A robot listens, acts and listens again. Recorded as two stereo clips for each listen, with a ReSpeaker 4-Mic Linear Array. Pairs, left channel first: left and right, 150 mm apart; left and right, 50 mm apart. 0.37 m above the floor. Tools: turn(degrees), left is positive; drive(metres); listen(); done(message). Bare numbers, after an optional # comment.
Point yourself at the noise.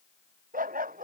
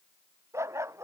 # The dog barking: about 70° right or 110° right.
turn(-70)
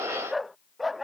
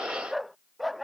done("Found it: a dog barking, straight ahead.")